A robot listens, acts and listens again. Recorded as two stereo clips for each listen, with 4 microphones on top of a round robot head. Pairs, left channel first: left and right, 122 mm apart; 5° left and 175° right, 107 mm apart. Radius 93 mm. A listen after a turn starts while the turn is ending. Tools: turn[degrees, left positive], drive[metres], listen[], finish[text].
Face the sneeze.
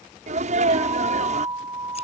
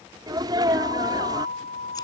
Thought: The sneeze: 120° right.
Action: turn[-120]
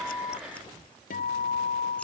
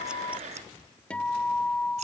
Action: finish[I heard a sneeze from this way, but can't make it out now.]